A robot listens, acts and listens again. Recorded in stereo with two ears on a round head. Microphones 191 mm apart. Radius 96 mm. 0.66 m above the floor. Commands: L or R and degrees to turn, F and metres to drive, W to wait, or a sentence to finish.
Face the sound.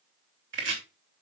R60
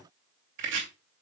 R55
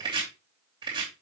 R20
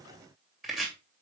Found it: chopping, straight ahead.